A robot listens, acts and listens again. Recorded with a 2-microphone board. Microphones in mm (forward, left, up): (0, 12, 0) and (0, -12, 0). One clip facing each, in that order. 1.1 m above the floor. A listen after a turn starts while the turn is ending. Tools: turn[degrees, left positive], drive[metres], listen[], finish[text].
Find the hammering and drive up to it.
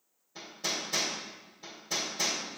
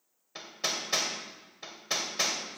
Thought: The hammering: about 55° right or 125° right.
Action: turn[-55]
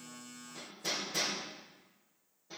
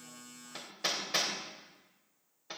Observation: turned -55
Thought: So it is at 70° right.
Action: turn[-70]
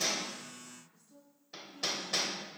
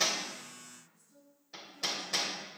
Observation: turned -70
Thought: The hammering is now 10° left.
Action: turn[10]
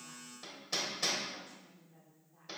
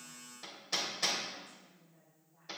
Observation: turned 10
Action: drive[1.0]
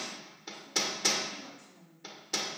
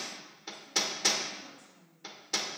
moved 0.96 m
Action: drive[1.0]
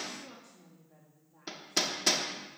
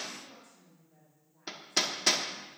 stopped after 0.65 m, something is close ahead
Action: finish[Arrived at the hammering, straight ahead.]